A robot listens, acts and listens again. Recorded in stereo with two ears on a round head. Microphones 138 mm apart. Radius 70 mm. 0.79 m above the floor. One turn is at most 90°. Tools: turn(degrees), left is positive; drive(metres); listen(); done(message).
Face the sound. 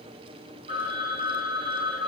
turn(degrees=-35)
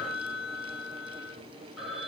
done("Facing the phone ringing.")